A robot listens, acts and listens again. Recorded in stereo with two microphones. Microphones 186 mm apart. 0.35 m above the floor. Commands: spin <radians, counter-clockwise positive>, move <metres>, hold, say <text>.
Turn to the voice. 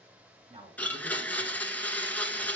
spin -0.61
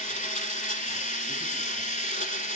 hold
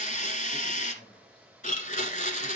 spin 0.44
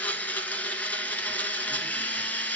hold
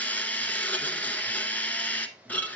hold
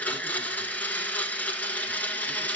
say I heard a man speaking from this way, but can't make it out now.